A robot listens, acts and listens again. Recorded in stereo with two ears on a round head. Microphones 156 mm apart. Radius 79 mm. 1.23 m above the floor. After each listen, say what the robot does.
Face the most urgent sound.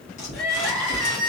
Turn 30° left.
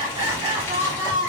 Turn 25° right.
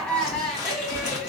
Turn 10° left.
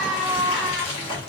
Facing the crying, 1 to 2 m away.